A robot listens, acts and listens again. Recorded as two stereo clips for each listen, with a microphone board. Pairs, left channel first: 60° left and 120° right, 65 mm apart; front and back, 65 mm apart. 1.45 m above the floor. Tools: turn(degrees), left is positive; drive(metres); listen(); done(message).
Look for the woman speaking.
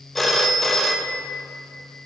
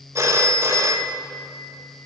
listen()
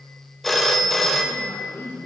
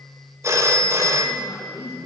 turn(degrees=10)
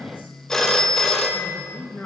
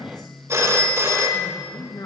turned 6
done("Facing the woman speaking.")